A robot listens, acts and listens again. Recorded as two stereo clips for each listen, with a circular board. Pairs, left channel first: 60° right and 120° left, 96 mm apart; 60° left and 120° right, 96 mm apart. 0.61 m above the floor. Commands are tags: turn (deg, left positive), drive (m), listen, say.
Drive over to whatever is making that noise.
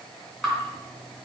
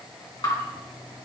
<turn deg="25"/>
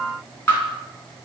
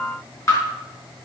<drive m="1.0"/>
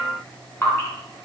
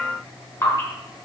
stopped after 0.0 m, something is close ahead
<say>Something is in my way. I am facing the dripping but have not reached it.</say>